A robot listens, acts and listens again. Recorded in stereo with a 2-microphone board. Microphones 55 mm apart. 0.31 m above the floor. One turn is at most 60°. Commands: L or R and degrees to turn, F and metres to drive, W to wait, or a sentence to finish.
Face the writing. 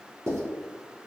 R50
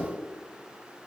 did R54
W
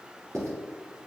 R60
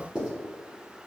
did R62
R15
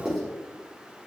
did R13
Facing the writing.